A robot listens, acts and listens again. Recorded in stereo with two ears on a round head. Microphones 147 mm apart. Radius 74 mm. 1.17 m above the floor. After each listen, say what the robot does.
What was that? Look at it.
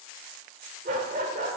Turn 45° right.
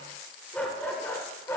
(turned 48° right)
Turn 15° left.
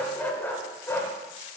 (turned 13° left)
Turn 15° left.
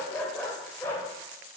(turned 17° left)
Turn 15° left.
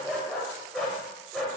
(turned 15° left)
Facing the dog barking.